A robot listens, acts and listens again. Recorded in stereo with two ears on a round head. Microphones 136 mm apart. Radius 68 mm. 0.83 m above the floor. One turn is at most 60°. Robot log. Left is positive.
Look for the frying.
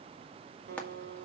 cmd yaw +30
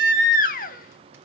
cmd idle
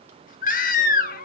cmd idle
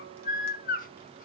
end: I heard frying, but can't make it out now. It was about 20° right or 140° left.